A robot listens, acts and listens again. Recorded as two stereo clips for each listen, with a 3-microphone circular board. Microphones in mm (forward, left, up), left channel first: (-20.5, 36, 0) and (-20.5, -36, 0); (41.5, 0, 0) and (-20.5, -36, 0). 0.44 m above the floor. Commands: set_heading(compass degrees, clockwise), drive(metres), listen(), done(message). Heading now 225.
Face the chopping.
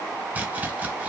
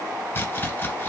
set_heading(250)
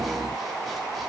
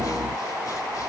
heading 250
listen()
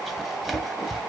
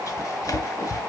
done("Facing the chopping, under 1 m away.")